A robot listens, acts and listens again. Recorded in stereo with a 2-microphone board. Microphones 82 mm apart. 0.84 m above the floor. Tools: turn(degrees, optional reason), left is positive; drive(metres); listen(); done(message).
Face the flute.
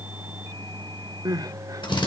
listen()
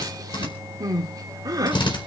listen()
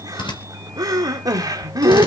done("I can't make out a flute, only crying and a drill.")